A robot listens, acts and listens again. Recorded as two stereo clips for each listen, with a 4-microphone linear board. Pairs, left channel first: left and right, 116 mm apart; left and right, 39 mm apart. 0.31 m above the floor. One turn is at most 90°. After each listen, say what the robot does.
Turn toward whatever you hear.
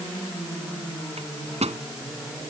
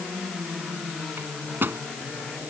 Turn 70° right.
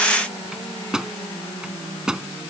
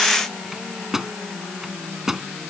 Facing the microwave.